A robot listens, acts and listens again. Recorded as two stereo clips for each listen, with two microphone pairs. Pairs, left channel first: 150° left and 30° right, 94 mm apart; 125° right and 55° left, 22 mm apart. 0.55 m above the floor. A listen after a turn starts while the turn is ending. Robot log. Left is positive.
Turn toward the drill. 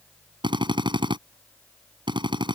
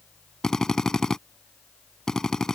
note: The drill: 65° right.
cmd yaw -65
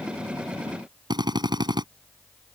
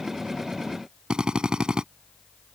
end: Facing the drill.